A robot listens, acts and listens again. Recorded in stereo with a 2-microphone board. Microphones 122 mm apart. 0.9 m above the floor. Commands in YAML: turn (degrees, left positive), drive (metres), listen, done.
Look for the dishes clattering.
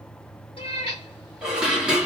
turn: -30
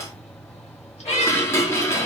turn: 20
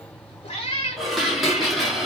done: "Found it: dishes clattering, straight ahead, under 1 m away."